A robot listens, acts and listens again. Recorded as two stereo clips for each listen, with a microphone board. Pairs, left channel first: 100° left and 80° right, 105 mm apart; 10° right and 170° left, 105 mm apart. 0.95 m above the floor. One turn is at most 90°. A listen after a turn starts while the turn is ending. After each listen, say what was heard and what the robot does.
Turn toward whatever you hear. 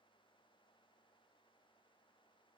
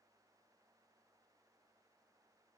Keep listening.
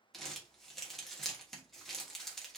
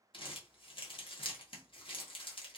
The crumpling: 15° left. Turn 15° left.
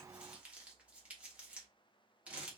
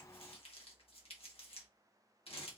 Facing the crumpling.